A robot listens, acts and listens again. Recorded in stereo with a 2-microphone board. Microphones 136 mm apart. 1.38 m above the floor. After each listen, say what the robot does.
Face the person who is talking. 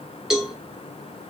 Keep listening.
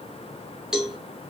Keep listening.
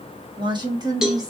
Turn 25° right.
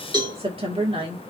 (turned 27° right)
Turn 40° right.
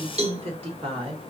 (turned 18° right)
Turn 135° right.
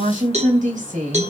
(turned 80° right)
Turn 60° right.
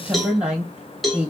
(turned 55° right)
Turn 10° right.
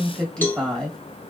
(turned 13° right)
Found it: a woman speaking, straight ahead.